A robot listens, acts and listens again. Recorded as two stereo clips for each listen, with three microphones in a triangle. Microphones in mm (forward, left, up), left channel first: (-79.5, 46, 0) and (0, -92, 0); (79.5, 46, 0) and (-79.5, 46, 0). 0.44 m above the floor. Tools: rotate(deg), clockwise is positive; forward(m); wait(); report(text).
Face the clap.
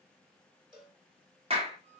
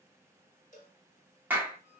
rotate(105)
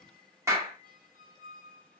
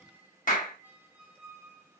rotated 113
rotate(-10)
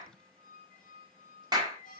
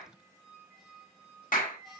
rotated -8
report("Found it: a clap, straight ahead.")